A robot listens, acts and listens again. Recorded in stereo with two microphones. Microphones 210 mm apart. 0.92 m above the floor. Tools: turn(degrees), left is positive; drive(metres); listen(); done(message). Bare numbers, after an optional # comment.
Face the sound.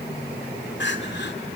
# The crying: about 65° left or 115° left.
turn(65)
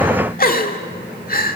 # So it is at 50° left.
turn(50)
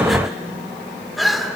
done("Facing the crying, 1 to 2 m away.")